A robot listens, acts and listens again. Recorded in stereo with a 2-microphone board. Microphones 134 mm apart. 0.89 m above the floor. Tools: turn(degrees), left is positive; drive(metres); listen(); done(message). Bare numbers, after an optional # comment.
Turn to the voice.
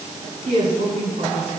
turn(-90)
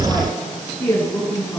# So it is at 10° left.
turn(10)
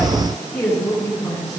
done("Found it: a woman speaking, straight ahead.")